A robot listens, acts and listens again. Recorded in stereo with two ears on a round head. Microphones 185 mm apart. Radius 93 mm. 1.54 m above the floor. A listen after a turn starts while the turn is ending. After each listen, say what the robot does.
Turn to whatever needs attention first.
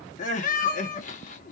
Turn 40° left.
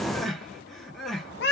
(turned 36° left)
Facing the crying, 1 to 2 m away.